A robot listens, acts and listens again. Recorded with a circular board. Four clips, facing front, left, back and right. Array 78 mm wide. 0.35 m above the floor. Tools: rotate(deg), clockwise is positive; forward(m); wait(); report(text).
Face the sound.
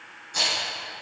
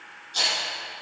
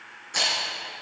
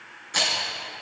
rotate(110)
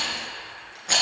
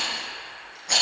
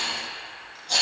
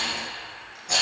rotate(-15)
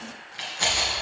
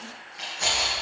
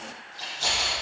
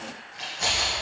report("Facing the rattle, 2 to 4 m away.")